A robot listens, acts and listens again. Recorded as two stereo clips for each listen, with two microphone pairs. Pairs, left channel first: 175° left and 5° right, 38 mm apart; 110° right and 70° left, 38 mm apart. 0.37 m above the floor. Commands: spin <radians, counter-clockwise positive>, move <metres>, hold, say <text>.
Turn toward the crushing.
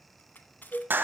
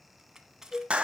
spin 2.53
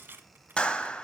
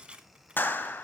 spin 0.17
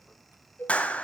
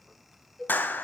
hold
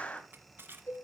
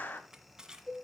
say Found it: crushing, straight ahead.